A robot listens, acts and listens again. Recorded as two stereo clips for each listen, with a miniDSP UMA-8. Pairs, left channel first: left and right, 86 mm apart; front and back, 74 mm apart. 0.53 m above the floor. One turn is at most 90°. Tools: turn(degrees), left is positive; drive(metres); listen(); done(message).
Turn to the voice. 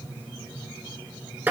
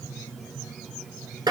listen()
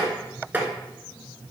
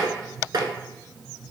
listen()
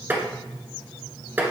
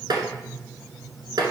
done("I can't make out anyone speaking to turn to.")